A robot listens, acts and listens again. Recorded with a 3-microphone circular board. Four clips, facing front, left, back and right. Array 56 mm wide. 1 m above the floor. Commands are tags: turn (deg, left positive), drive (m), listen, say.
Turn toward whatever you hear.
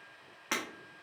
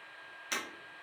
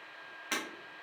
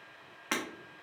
<turn deg="-70"/>
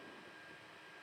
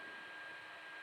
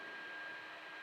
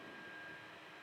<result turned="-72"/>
<say>Facing where the breaking glass came from. I can't hear it now.</say>